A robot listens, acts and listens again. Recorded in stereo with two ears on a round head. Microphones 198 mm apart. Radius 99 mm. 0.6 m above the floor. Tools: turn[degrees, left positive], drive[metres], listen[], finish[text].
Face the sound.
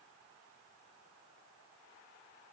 Action: listen[]
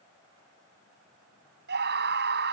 Thought: The scream: about 50° right or 130° right.
Action: turn[-50]
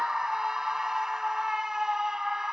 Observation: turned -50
Action: finish[Facing the scream.]